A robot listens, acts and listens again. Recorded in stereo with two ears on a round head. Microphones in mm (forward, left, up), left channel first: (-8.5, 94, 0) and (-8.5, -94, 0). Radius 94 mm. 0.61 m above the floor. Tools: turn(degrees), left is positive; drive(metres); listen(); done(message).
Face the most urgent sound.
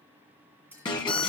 turn(degrees=20)
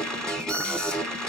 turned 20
done("Found it: an alarm, straight ahead.")